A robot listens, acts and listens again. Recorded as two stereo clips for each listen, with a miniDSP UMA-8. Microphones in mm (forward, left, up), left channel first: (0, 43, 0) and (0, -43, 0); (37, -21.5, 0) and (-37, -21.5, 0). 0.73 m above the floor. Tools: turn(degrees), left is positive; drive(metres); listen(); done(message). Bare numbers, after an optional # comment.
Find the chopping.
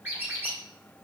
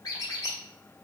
listen()
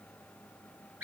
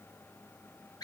listen()
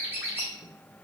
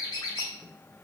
done("I can't make out chopping to turn to.")